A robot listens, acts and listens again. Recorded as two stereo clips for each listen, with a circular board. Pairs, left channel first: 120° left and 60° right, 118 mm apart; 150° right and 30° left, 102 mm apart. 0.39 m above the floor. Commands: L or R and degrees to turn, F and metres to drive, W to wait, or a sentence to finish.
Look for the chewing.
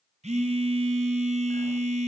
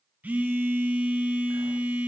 W
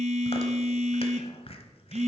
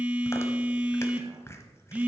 L150
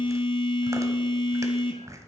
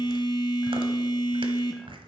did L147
Found it: chewing, straight ahead.